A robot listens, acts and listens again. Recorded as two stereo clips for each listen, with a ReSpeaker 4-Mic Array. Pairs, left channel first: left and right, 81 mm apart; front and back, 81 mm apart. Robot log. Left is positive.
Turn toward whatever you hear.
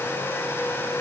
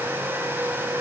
cmd idle
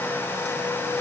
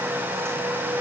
cmd idle
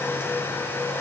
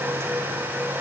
end: I can't make out anything.